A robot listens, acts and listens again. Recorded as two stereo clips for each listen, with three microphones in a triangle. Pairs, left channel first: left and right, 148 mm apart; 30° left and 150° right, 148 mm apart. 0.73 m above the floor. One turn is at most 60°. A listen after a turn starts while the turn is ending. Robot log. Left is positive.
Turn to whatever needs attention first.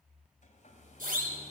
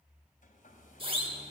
note: The siren: 100° right.
cmd yaw -60
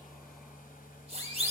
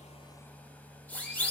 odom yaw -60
note: The siren is now 50° right.
cmd yaw -50
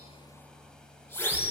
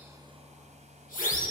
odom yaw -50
note: The siren is now 15° left.
cmd yaw +15
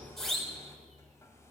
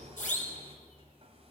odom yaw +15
end: Facing the siren, over 4 m away.